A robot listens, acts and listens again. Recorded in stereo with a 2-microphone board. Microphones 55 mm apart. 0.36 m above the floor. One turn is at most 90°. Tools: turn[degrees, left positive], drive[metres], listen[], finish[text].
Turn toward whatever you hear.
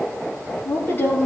Thought: The woman speaking: about 40° left or 140° left.
Action: turn[40]
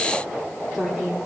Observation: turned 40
Action: finish[Facing the woman speaking.]